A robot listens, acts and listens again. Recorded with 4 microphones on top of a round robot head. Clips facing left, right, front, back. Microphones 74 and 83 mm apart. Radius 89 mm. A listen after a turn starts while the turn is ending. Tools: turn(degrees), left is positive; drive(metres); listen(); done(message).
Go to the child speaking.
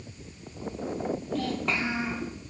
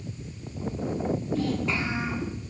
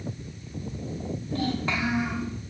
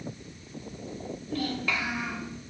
turn(degrees=60)
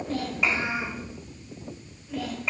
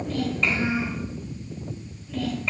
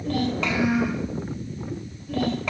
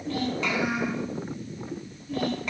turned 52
turn(degrees=10)
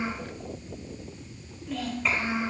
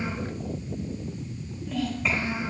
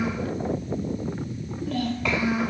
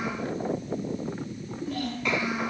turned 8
drive(metres=1.0)
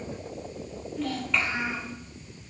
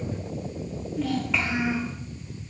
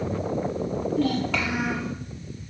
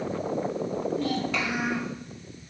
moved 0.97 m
drive(metres=1.0)
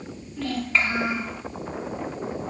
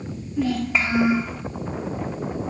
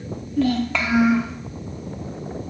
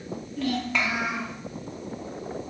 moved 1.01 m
turn(degrees=-15)
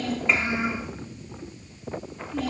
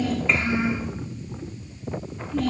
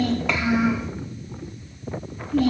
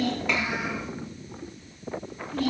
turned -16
drive(metres=1.0)
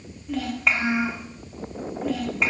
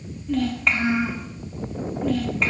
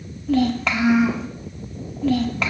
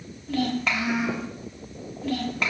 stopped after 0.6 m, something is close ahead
done("Arrived at the child speaking, straight ahead.")